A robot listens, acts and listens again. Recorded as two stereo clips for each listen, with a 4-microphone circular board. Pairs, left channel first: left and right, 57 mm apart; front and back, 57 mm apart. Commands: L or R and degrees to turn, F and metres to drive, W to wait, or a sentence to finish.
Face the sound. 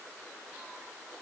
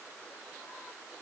W
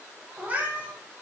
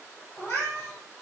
R30
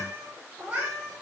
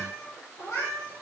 R25
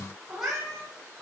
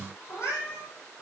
R10
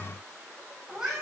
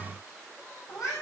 R10
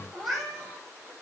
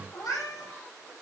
Facing the cat meowing, over 4 m away.